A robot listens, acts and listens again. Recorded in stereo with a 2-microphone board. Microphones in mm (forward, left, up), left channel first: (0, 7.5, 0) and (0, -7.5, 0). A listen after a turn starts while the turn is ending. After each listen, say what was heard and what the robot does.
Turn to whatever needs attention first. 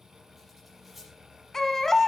The baby crying: about 35° left or 145° left. Turn 35° left.
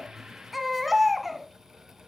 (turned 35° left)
Found it: a baby crying, straight ahead.